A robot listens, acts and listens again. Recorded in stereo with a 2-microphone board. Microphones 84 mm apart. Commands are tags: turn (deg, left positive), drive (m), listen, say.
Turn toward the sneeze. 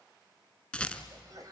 <turn deg="-50"/>
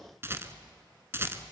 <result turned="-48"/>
<listen/>
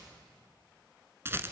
<say>I heard a sneeze, but can't make it out now. It was about straight ahead or 85° right.</say>